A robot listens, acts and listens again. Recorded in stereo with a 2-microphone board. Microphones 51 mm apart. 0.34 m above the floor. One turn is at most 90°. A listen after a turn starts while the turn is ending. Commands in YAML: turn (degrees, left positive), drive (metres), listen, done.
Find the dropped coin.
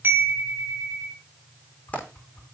turn: 30
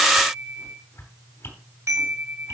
listen: true
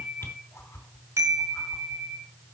done: "I heard a dropped coin, but can't make it out now. It was about straight ahead or 120° left."